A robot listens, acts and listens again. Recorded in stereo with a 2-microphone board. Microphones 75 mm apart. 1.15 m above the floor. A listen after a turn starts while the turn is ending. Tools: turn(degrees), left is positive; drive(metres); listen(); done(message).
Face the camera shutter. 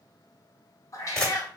turn(degrees=30)
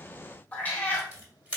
turn(degrees=-20)
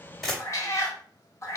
done("Found it: a camera shutter, straight ahead, 2 to 4 m away.")